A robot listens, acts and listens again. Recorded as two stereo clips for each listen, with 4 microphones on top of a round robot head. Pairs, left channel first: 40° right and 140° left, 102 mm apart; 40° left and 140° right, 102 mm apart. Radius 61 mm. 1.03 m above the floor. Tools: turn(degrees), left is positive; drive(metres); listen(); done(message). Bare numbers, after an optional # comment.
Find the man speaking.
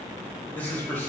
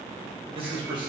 # The man speaking: 110° right.
turn(-110)
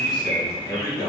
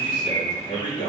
# The man speaking is now 15° left.
turn(15)
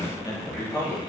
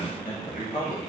# The man speaking is now 20° left.
turn(20)
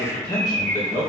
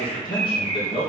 # The man speaking is now 15° left.
turn(15)
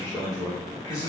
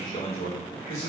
# The man speaking is now 10° left.
turn(10)
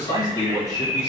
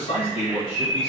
# The man speaking is now 10° left.
turn(10)
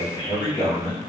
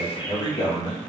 done("Facing the man speaking.")